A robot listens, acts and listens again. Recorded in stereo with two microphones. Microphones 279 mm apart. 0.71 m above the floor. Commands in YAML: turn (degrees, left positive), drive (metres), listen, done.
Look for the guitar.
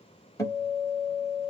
turn: 30
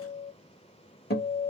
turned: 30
turn: 135
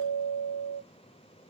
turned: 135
turn: 50
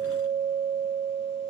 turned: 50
done: "Found it: a guitar, straight ahead."